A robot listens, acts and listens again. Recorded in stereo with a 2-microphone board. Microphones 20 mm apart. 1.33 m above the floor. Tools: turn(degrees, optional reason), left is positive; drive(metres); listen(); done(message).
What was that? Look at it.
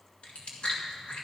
turn(degrees=65, reason="The chewing: about 65° left or 115° left.")
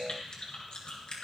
turn(degrees=50, reason="So it is at 50° left.")
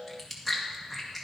done("Found it: chewing, straight ahead, 1 to 2 m away.")